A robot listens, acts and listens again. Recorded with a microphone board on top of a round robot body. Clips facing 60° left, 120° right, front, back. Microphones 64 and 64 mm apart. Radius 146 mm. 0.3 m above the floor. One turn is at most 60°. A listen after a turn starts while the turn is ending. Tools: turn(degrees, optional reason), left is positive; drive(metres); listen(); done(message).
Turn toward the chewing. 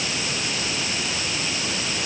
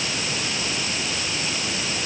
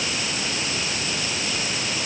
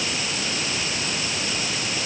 listen()
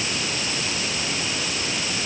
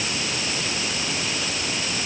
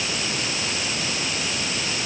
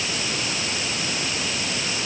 listen()
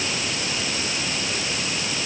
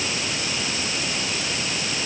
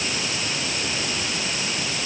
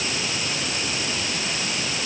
done("I can't make out chewing.")